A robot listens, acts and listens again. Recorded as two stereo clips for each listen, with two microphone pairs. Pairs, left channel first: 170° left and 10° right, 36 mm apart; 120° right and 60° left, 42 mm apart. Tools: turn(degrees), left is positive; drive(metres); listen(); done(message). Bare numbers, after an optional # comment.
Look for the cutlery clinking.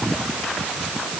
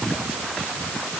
listen()
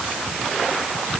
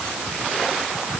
listen()
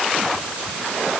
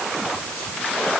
done("I can't make out cutlery clinking to turn to.")